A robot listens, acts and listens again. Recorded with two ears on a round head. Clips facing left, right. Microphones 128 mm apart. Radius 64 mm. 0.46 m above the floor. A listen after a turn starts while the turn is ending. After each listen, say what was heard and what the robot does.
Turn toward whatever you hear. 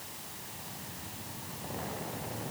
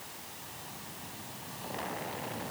Keep listening.
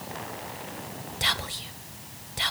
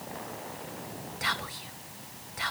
The whispering: about 35° left or 145° left. Turn 35° left.
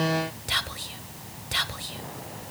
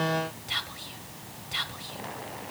So it is at 110° left. Turn 110° left.
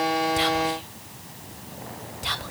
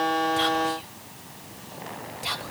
Found it: whispering, straight ahead.